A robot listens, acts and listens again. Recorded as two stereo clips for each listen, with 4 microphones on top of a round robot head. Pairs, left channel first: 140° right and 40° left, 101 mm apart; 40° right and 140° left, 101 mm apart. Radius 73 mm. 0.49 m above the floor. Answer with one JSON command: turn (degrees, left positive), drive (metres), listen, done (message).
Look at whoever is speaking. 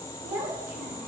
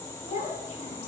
{"turn": -25}
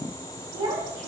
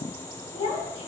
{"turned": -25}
{"turn": -10}
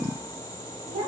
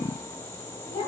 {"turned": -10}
{"done": "Found it: a child speaking, straight ahead."}